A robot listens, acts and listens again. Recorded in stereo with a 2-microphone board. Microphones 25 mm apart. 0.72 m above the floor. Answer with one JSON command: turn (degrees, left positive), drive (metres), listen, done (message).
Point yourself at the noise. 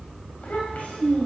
{"turn": 70}
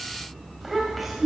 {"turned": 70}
{"done": "Facing the child speaking, 1 to 2 m away."}